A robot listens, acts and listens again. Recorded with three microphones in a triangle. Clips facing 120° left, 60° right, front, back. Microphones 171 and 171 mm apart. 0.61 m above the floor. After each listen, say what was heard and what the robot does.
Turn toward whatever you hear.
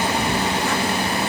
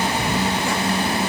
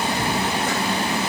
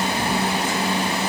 Keep listening.
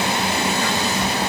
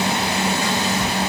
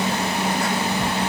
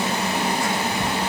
Keep listening.
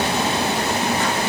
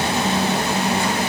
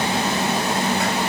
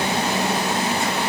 I can't make out anything to turn to.